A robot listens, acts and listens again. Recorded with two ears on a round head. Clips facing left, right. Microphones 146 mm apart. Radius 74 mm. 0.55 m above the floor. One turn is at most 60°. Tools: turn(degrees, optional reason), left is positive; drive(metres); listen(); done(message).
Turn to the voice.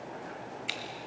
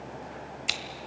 listen()
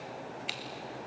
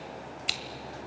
listen()
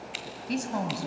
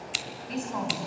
turn(degrees=45, reason="The woman speaking: about 45° left or 135° left.")
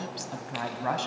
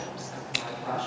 turn(degrees=60, reason="So it is at 95° left.")
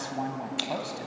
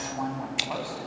turn(degrees=25, reason="The woman speaking is now 25° left.")
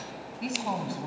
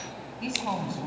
turn(degrees=10, reason="The woman speaking is now 10° left.")
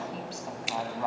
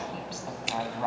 done("Facing the woman speaking.")